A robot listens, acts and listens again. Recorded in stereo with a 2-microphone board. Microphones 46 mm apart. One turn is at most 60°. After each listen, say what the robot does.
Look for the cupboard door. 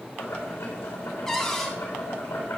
Turn 30° left.
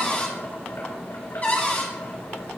Turn 60° left.
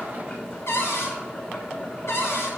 Turn 60° left.
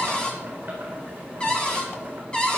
Turn 20° left.
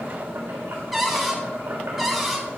Found it: a cupboard door, straight ahead.